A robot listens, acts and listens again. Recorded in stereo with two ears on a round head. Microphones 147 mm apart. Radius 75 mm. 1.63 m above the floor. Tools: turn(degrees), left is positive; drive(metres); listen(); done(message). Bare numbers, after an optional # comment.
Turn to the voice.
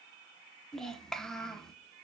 turn(30)
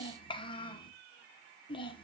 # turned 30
# So it is at 145° left.
turn(145)
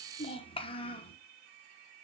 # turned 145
# The child speaking is now 40° left.
turn(40)
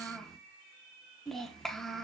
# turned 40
done("Facing the child speaking.")